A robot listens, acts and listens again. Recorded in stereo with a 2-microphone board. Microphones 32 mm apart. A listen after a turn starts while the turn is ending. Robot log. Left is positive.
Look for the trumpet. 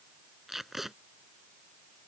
cmd idle
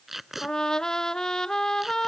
note: The trumpet: about 20° left or 160° left.
cmd yaw +20
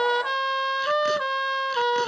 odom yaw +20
end: Facing the trumpet.